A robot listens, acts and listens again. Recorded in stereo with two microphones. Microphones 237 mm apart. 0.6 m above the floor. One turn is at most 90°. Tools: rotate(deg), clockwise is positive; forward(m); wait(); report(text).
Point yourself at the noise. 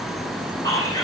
rotate(-15)
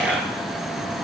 wait()
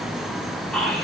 report("Facing the whispering, 2 to 4 m away.")